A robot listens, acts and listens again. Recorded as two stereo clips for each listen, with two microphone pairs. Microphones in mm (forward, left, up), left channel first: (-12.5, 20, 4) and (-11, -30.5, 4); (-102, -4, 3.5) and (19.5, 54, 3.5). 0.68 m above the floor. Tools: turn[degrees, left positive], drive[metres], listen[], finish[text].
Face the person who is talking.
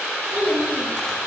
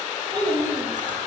Thought: The child speaking: 30° right.
Action: turn[-30]
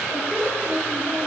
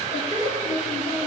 Action: finish[Found it: a child speaking, straight ahead, over 4 m away.]